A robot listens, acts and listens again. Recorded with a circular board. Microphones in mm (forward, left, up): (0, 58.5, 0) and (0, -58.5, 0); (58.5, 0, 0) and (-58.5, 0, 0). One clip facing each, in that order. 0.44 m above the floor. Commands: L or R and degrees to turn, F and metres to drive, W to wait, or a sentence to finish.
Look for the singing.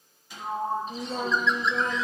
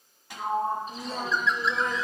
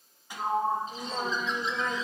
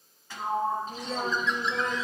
R105
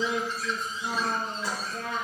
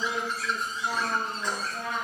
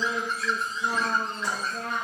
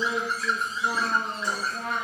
R20
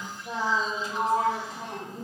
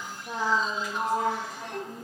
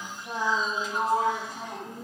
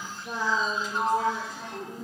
Facing the singing.